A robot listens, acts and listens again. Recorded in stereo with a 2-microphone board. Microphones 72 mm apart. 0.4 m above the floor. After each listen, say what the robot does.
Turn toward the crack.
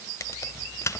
Turn 45° left.
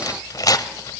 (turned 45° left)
Keep listening.
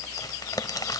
I heard a crack, but can't make it out now. It was about straight ahead or 90° left.